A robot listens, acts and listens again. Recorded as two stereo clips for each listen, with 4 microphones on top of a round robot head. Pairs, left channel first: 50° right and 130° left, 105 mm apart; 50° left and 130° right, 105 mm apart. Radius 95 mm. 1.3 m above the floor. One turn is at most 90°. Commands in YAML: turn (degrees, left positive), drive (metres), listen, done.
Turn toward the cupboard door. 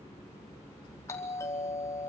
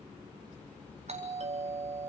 listen: true
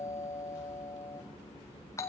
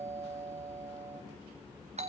listen: true
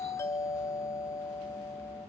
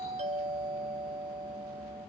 done: "I can't make out a cupboard door, only a doorbell."